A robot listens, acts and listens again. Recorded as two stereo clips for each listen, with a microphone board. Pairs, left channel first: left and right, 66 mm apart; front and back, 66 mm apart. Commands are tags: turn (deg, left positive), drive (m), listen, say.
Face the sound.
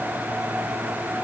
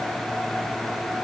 <listen/>
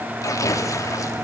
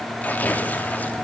<turn deg="60"/>
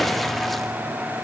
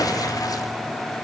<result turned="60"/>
<say>Facing the tearing paper.</say>